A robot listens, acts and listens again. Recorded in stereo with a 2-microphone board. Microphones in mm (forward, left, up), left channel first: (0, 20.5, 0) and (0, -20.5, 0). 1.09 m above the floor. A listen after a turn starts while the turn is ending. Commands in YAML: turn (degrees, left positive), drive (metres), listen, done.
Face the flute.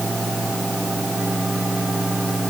listen: true
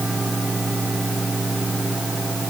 listen: true
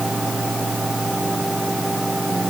done: "I can't make out a flute to turn to."